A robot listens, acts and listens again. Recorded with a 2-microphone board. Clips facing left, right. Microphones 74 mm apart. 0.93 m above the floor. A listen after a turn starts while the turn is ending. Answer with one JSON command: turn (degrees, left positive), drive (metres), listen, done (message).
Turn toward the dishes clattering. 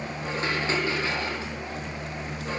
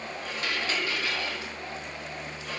{"turn": 30}
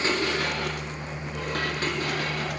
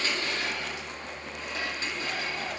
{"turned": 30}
{"turn": 120}
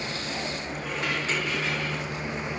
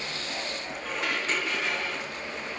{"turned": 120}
{"done": "Found it: dishes clattering, straight ahead, 1 to 2 m away."}